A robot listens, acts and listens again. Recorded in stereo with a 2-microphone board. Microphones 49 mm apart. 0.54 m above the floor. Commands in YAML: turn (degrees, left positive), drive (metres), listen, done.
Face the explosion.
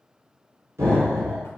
turn: -90
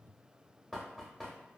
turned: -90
done: "I heard an explosion from this way, but can't make it out now."